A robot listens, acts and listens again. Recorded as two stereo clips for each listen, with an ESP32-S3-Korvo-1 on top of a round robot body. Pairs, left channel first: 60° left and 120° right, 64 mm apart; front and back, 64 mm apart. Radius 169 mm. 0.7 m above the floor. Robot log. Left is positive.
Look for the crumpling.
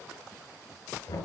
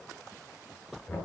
cmd idle
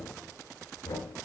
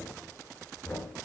cmd idle
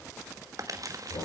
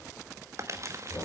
note: The crumpling: 140° right.
cmd yaw -140
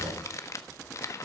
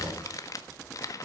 note: The crumpling is now 25° left.
cmd yaw +25
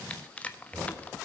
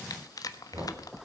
note: The crumpling is now 10° right.
cmd yaw -10
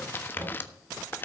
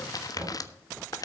end: Facing the crumpling, 1 to 2 m away.